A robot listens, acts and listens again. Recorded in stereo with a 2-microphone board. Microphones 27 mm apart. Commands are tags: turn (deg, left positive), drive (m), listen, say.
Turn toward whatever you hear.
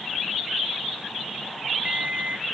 <turn deg="-60"/>
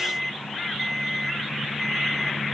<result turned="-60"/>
<say>Found it: an alarm clock, straight ahead.</say>